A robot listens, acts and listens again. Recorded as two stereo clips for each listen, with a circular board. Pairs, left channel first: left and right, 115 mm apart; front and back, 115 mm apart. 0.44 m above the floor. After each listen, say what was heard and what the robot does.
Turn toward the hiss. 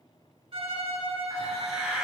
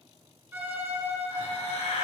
Facing the hiss, 1 to 2 m away.